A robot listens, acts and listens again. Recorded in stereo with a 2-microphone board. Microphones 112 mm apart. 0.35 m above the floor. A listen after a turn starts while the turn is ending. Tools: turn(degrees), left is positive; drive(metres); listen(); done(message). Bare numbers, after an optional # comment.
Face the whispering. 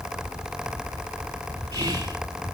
# The whispering: about 35° right or 145° right.
turn(-35)
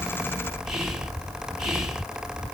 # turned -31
done("Found it: whispering, straight ahead.")